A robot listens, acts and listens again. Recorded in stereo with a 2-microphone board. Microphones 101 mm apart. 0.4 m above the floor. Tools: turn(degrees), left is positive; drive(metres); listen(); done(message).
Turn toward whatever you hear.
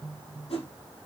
turn(degrees=90)
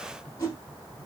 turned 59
turn(degrees=35)
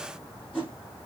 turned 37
done("Found it: a whoosh, straight ahead, 2 to 4 m away.")